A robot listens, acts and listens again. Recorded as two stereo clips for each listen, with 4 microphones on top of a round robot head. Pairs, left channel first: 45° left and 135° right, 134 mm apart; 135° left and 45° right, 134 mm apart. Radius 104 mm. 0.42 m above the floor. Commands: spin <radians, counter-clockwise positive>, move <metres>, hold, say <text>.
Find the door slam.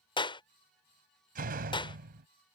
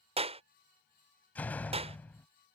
spin -2.53
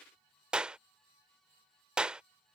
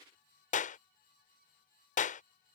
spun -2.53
say Facing where the door slam came from. I can't hear it now.